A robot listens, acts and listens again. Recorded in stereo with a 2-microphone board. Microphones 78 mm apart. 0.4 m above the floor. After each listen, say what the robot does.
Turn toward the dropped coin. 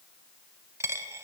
Turn 35° right.
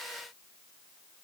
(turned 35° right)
Keep listening.
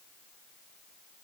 I heard a dropped coin, but can't make it out now. It was about straight ahead or 110° right.